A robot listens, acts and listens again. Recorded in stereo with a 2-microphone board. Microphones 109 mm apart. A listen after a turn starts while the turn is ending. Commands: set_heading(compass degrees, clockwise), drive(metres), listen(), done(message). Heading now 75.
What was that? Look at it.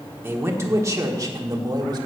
set_heading(115)
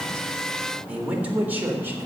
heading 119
set_heading(139)
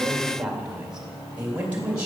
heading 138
set_heading(153)
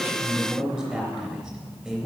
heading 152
done("Facing the man speaking, 2 to 4 m away.")